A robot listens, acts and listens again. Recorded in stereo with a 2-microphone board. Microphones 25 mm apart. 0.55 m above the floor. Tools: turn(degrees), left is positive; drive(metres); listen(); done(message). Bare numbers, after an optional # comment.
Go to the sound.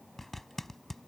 turn(30)
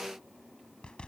# So it is at 140° left.
turn(140)
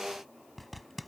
drive(1.0)
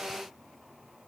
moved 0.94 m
listen()
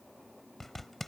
# The zipper is now 15° left.
turn(15)
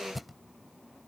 drive(1.0)
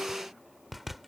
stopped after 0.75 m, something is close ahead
done("I am next to the zipper.")